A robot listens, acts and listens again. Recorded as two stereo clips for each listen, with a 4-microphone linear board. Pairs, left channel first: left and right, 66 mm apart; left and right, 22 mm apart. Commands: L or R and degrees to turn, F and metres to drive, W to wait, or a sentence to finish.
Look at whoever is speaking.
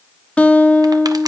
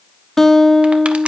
W
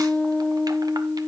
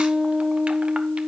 W
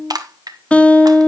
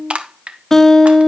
I can't make out anyone speaking, only a guitar and crushing.